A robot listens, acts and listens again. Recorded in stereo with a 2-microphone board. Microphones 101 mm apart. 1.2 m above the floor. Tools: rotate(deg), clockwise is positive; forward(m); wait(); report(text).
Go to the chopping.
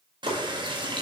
rotate(90)
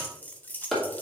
forward(1.0)
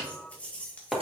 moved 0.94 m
forward(1.0)
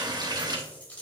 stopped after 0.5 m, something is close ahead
wait()
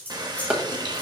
rotate(10)
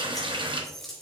wait()
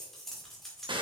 wait()
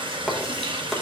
report("Arrived at the chopping, straight ahead.")